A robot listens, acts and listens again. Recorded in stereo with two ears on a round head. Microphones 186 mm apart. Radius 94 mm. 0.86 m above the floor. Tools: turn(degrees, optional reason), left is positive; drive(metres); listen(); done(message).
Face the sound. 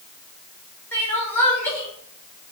turn(degrees=30)
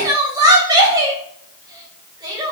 turn(degrees=-20, reason="So it is at 20° right.")
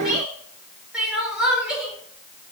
done("Found it: crying, straight ahead.")